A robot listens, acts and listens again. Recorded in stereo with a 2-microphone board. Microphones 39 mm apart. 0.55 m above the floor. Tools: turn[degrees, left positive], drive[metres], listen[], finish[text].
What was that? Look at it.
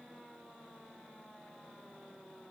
Action: listen[]
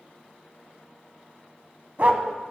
Thought: The dog barking: about 45° right or 135° right.
Action: turn[-45]
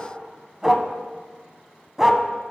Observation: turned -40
Thought: So it is at 10° right.
Action: turn[-10]
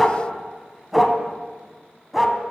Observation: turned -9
Action: finish[Facing the dog barking.]